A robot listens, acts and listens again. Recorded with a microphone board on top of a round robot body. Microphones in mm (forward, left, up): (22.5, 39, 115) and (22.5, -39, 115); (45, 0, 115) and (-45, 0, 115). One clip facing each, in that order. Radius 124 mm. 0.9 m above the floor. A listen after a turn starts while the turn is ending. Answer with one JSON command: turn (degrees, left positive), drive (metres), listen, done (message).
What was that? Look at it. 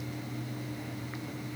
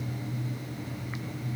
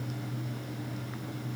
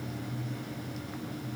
{"listen": true}
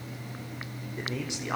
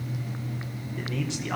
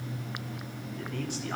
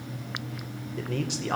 {"turn": 165}
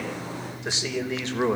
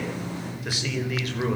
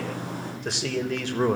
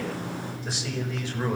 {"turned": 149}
{"turn": 30}
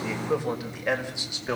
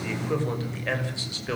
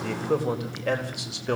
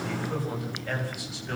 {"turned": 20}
{"turn": 20}
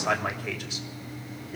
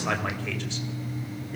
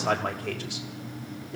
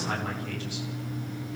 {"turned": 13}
{"turn": 10}
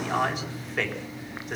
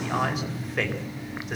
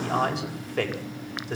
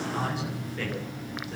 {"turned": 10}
{"done": "Found it: a man speaking, straight ahead, over 4 m away."}